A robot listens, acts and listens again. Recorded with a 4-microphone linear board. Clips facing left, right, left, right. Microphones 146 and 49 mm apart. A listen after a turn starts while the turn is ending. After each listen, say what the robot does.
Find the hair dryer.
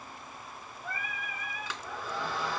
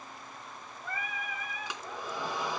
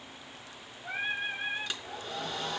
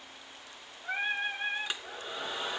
Turn 15° right.
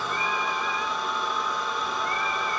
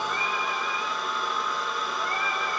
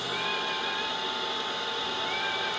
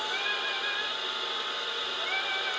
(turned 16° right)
Facing the hair dryer.